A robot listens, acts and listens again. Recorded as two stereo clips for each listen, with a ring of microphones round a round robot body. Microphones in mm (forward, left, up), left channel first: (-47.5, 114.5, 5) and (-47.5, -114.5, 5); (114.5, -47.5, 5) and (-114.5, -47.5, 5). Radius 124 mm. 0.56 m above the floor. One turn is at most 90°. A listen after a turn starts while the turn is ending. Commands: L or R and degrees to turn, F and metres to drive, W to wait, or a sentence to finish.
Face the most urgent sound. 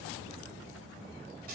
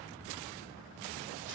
W
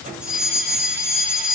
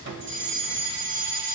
R90
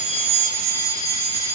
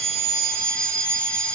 R80
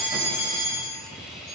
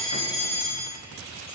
Found it: a fire alarm, straight ahead, 2 to 4 m away.